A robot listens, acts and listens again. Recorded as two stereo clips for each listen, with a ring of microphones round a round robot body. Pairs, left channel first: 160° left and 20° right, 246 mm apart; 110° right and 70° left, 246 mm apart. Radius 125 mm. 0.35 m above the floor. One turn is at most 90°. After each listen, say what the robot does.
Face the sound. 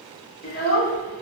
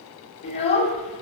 Turn 90° right.
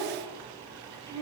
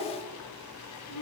Turn 90° right.
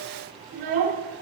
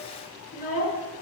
Turn 60° right.
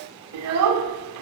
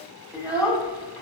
Turn 15° right.
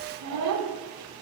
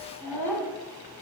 Turn 10° right.
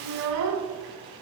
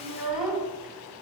Found it: a child speaking, straight ahead.